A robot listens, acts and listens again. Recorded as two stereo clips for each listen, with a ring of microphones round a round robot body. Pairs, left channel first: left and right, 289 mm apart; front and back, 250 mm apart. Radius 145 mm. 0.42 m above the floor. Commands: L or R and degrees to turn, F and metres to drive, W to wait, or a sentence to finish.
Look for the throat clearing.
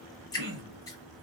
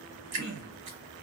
R125
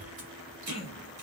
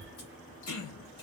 L20
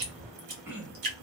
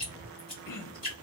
Facing the throat clearing, under 1 m away.